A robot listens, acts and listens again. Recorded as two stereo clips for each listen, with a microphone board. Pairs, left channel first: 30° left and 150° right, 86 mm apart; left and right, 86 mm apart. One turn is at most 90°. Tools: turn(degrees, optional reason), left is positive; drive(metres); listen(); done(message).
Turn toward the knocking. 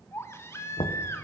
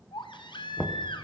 turn(degrees=15, reason="The knocking: 15° left.")
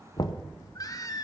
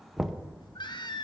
done("Facing the knocking, under 1 m away.")